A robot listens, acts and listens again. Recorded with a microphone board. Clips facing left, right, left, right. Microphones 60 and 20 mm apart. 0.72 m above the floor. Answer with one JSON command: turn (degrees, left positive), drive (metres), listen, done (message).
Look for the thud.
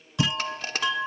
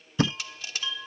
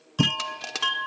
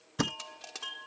{"turn": -50}
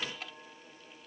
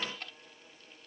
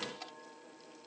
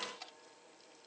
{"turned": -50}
{"listen": true}
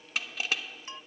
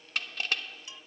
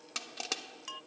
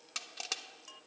{"done": "I heard a thud, but can't make it out now. It was about straight ahead or 80° right."}